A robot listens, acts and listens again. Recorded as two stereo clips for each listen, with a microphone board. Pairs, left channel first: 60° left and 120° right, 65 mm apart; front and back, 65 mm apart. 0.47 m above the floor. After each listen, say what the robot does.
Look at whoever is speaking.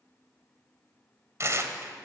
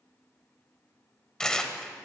Keep listening.
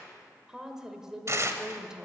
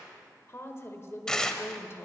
Turn 45° right.
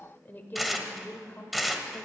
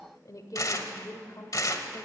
Facing the woman speaking.